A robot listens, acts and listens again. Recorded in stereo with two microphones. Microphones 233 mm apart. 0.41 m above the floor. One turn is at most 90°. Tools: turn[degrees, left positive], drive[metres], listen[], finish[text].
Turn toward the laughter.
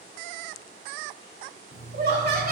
Thought: The laughter: about 40° right or 140° right.
Action: turn[-40]
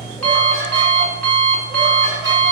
Action: listen[]
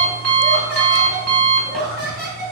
Thought: The laughter: about 45° right or 135° right.
Action: turn[-45]
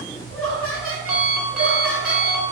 Thought: So it is at 70° right.
Action: turn[-70]
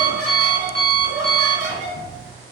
Thought: The laughter is now 10° right.
Action: turn[-10]
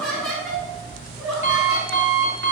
Action: finish[Found it: laughter, straight ahead, 2 to 4 m away.]